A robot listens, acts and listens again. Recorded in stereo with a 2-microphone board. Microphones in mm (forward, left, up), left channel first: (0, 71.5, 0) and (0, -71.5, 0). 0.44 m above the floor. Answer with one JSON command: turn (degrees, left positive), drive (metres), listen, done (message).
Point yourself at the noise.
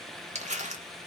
{"turn": -55}
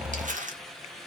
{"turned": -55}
{"turn": -65}
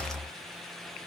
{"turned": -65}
{"listen": true}
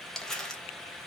{"done": "Found it: crumpling, straight ahead, 1 to 2 m away."}